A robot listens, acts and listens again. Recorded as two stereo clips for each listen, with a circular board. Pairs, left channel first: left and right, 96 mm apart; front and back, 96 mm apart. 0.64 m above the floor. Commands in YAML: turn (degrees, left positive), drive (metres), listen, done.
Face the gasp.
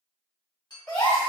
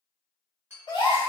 turn: 10
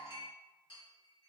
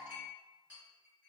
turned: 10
done: "Facing where the gasp came from. I can't hear it now."